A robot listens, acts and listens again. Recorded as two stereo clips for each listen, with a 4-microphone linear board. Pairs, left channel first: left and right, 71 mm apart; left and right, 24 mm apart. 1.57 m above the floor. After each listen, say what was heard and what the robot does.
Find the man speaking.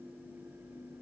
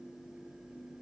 Keep listening.
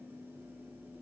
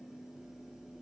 Keep listening.
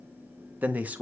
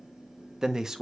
The man speaking: about 20° right or 160° right. Turn 20° right.
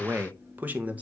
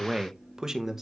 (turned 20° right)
The man speaking: about 20° right or 160° right. Turn 20° right.
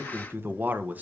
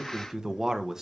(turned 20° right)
The man speaking: about 20° right or 160° right. Turn 20° right.
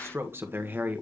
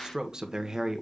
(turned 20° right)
The man speaking: about 25° right or 155° right. Turn 25° right.
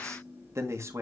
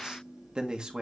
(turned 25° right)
So it is at 140° right. Turn 140° right.
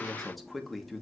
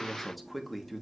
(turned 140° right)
Found it: a man speaking, straight ahead, 1 to 2 m away.